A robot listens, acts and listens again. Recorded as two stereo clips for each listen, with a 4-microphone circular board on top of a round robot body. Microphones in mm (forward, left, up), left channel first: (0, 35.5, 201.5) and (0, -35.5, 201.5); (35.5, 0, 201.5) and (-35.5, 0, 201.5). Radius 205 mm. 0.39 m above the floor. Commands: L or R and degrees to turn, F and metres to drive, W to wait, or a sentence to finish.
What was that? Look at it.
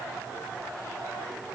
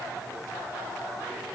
W
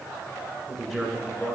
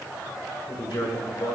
L10
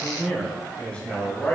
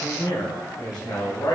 L20
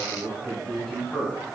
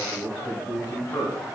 L15
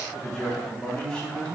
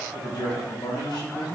L10
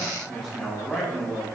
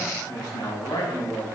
Facing the man speaking.